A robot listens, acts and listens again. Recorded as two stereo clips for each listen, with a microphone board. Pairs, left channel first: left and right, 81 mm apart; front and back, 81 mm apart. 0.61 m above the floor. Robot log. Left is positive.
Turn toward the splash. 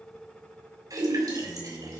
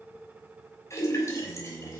note: The splash: 50° right.
cmd yaw -50
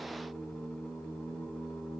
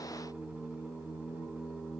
end: Facing where the splash came from. I can't hear it now.